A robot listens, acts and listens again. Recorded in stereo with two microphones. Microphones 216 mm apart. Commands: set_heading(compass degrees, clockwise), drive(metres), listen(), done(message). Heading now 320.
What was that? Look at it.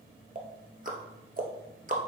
set_heading(0)
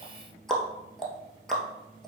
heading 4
done("Facing the ticking, 1 to 2 m away.")